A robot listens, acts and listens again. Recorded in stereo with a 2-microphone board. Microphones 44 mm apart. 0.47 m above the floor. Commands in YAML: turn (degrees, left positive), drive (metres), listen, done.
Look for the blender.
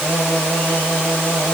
listen: true
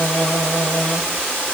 listen: true
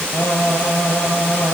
done: "I can't make out a blender, only singing."